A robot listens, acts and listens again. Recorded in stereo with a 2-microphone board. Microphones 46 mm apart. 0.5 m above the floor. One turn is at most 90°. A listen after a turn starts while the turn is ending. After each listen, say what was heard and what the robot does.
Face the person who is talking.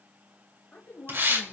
The woman speaking: about 45° left or 135° left. Turn 45° left.
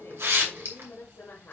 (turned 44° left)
The woman speaking: about 45° left or 135° left. Turn 45° left.
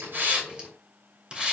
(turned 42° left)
Keep listening.
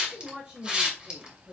So it is at 40° right. Turn 40° right.
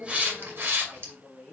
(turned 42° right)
The woman speaking is now 10° right. Turn 10° right.
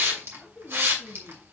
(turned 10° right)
Found it: a woman speaking, straight ahead.